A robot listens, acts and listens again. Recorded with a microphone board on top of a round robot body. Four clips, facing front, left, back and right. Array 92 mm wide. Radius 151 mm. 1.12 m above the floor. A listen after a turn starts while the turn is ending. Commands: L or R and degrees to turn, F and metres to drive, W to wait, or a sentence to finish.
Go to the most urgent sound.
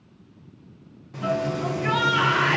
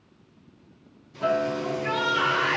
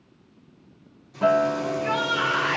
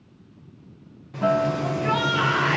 R10
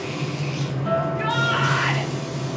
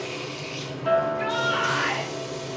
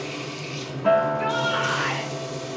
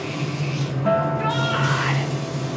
W
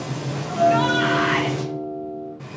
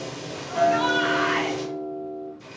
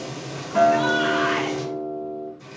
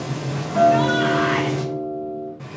W
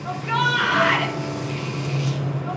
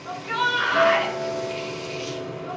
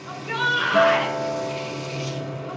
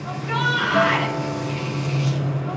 F1.0
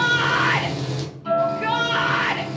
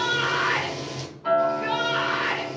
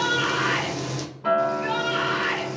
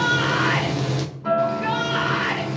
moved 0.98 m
F1.0
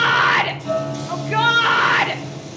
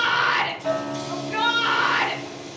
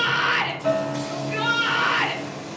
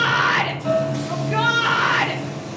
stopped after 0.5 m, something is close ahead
R10
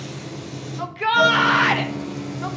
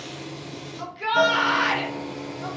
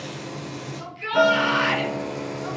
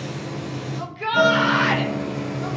I am next to the shout.